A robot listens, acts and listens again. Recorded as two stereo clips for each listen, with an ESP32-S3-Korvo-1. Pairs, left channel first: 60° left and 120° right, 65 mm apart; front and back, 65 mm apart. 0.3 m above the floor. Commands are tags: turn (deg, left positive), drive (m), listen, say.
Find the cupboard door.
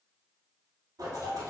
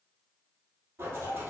<listen/>
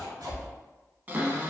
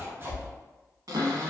<turn deg="180"/>
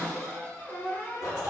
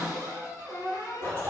<say>Found it: a cupboard door, straight ahead.</say>